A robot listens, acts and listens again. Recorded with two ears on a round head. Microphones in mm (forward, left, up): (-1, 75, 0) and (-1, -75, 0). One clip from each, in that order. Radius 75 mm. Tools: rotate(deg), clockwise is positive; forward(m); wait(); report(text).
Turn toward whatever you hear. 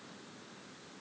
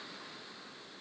wait()
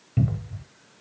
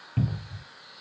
rotate(15)
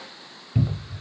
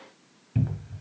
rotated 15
report("Facing the cupboard door, under 1 m away.")